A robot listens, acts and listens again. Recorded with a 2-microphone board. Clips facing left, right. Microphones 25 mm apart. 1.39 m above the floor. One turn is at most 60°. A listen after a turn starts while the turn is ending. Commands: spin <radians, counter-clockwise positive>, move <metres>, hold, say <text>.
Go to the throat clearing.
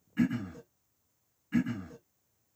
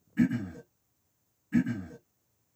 spin 0.61
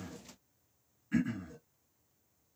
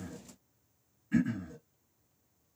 move 1.0
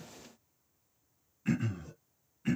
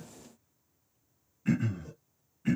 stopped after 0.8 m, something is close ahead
say I am next to the throat clearing.